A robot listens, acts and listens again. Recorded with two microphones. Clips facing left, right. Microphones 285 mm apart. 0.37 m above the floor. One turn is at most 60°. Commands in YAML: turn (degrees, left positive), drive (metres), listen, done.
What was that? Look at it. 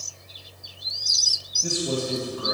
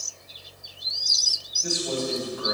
turn: 35
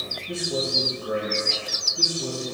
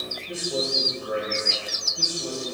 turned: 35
turn: -15
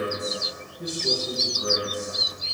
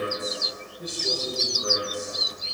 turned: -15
turn: -10
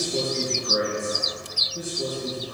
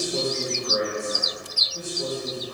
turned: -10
done: "Facing the man speaking."